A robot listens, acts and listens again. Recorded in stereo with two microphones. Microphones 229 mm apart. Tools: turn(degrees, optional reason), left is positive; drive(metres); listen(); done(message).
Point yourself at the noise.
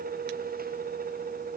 listen()
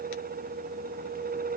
listen()
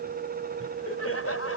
turn(degrees=90)
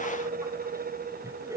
turn(degrees=-15, reason="So it is at 15° right.")
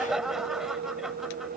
done("Found it: laughter, straight ahead.")